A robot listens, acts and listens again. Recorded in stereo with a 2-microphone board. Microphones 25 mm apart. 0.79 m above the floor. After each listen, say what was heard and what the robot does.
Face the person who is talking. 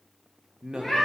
The man speaking: about 30° right or 150° right. Turn 30° right.
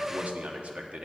So it is at 115° right. Turn 115° right.
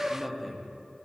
Found it: a man speaking, straight ahead, 1 to 2 m away.